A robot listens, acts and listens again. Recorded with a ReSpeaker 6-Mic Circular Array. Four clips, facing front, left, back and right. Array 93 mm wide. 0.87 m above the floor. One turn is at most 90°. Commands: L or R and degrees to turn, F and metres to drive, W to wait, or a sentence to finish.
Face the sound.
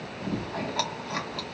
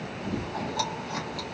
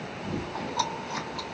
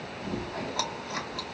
R20
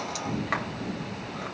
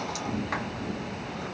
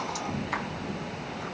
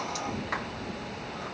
Found it: chewing, straight ahead.